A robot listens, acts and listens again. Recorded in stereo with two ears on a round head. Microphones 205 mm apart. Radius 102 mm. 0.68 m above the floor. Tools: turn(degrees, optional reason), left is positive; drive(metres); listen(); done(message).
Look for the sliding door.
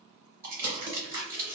listen()
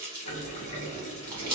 turn(degrees=60, reason="The sliding door: about 60° left or 120° left.")
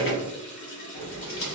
turn(degrees=50, reason="So it is at 50° left.")
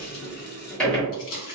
done("Facing the sliding door, 1 to 2 m away.")